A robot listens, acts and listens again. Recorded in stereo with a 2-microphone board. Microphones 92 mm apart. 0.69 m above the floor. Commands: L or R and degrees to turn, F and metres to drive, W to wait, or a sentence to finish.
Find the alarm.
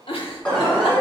L15
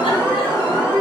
L150
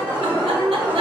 R35
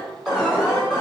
Found it: an alarm, straight ahead, 1 to 2 m away.